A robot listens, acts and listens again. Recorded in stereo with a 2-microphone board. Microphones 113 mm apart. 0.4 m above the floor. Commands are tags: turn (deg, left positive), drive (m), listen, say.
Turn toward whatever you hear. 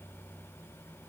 <listen/>
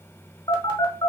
<turn deg="45"/>
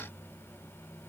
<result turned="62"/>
<listen/>
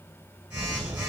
<turn deg="-15"/>
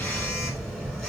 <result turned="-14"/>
<say>Found it: a phone buzzing, straight ahead, 1 to 2 m away.</say>